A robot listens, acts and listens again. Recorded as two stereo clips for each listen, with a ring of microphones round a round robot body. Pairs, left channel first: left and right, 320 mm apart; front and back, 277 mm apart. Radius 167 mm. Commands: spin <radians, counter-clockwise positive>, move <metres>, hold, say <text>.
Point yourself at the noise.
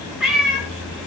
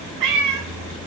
spin 3.14
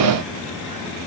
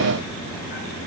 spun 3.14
hold
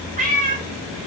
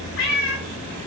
spin -0.44
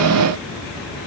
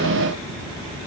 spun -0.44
hold
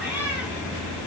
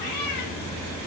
say Found it: a cat meowing, straight ahead, over 4 m away.